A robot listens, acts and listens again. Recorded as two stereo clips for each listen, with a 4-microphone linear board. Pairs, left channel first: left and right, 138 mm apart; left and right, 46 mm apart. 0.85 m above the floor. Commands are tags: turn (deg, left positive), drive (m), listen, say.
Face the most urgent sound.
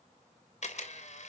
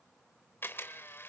<listen/>
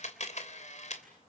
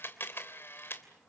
<listen/>
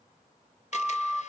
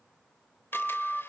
<turn deg="-30"/>
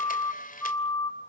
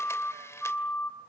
<turn deg="25"/>
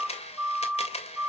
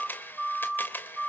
<turn deg="-10"/>
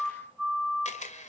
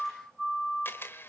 <say>Found it: a siren, straight ahead.</say>